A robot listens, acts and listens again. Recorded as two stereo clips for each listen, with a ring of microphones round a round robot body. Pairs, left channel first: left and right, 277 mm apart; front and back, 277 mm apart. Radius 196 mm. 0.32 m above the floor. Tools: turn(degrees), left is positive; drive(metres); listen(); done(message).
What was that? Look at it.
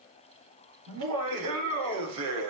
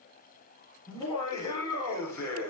turn(degrees=-85)
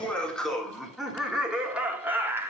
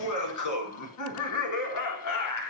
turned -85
turn(degrees=-10)
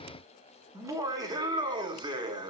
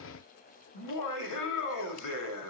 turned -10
turn(degrees=-15)
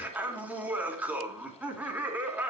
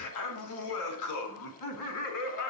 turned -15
done("Found it: laughter, straight ahead, 2 to 4 m away.")